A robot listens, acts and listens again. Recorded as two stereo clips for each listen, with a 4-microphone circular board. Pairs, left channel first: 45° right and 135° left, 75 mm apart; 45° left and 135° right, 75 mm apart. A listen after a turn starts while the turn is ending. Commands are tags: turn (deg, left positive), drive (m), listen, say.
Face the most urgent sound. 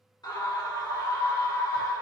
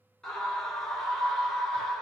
<turn deg="-35"/>
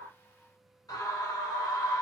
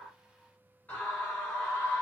<turn deg="-20"/>
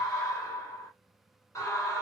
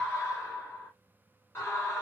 <say>Facing the scream, 1 to 2 m away.</say>